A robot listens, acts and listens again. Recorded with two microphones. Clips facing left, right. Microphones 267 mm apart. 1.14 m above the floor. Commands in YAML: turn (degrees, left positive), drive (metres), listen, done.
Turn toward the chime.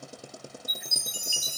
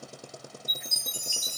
turn: 30
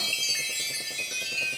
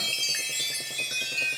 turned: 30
turn: -15
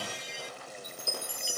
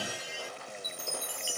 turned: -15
done: "Facing the chime."